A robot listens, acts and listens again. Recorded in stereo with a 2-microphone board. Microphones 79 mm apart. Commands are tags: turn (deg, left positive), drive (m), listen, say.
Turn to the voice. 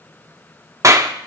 <listen/>
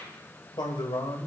<turn deg="75"/>
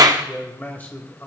<turn deg="25"/>
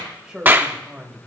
<say>Found it: a man speaking, straight ahead, 2 to 4 m away.</say>